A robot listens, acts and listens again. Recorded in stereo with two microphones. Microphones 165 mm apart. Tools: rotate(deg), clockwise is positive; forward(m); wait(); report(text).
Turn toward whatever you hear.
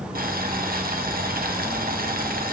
rotate(65)
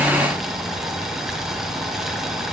report("Found it: boiling, straight ahead, 1 to 2 m away.")